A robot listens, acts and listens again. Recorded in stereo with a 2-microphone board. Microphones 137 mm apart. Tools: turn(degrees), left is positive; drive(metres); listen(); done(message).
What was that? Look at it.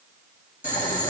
turn(degrees=60)
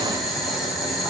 done("Found it: boiling, straight ahead.")